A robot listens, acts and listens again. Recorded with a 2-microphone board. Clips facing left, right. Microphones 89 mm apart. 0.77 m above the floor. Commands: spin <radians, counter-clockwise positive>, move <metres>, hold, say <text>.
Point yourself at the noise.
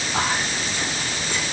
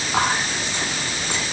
spin -1.57
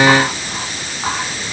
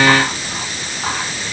spin 0.17
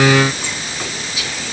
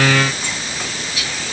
say Facing the whispering.